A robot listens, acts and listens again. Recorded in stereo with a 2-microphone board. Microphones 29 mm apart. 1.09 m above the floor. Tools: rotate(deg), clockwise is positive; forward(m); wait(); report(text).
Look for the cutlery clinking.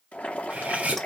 rotate(55)
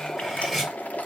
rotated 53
report("Found it: cutlery clinking, straight ahead, over 4 m away.")